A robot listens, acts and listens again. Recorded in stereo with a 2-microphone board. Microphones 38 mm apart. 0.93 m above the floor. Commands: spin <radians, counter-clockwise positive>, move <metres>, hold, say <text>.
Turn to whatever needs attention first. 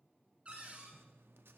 hold
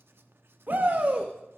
spin -0.96
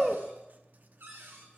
spin -0.17
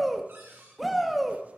say Facing the shout.